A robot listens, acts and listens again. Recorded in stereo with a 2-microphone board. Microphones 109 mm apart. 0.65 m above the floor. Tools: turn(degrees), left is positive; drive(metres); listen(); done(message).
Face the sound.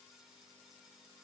listen()
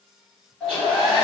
turn(degrees=30)
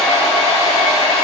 turn(degrees=140)
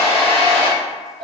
turn(degrees=10)
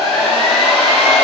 done("Facing the hair dryer, 1 to 2 m away.")